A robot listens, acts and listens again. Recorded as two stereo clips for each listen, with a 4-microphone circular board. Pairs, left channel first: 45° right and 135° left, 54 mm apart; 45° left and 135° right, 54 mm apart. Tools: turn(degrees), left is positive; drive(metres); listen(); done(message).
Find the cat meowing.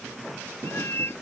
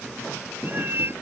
turn(degrees=-85)
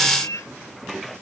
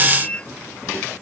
turn(degrees=-25)
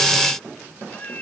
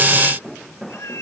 turn(degrees=15)
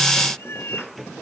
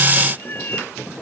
done("Found it: a cat meowing, straight ahead.")